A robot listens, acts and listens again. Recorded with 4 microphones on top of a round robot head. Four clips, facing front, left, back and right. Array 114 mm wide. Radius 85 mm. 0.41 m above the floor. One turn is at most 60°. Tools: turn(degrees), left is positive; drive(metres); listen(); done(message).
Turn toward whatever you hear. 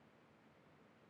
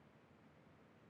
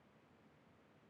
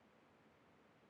listen()
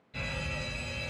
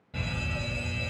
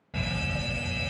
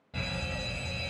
turn(degrees=-60)
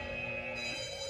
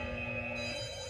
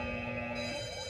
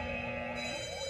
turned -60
turn(degrees=-60)
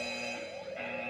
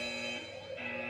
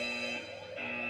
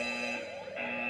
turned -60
turn(degrees=-60)
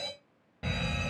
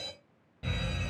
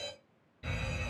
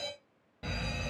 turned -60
turn(degrees=-15)
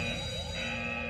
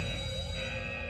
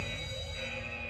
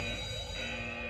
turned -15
done("Found it: a fire alarm, straight ahead, over 4 m away.")